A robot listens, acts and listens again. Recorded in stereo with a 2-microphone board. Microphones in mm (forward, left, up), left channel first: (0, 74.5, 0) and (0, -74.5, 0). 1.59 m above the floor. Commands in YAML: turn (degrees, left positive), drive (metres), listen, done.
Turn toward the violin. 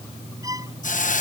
turn: -25
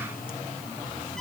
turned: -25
done: "Found it: a violin, straight ahead."